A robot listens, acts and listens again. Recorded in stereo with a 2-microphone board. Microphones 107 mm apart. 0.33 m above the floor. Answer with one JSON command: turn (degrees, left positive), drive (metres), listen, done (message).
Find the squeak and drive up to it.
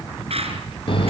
{"turn": -65}
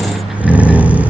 {"listen": true}
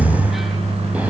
{"listen": true}
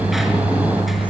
{"done": "I heard a squeak, but can't make it out now. It was about straight ahead or 50° right. I did not reach it."}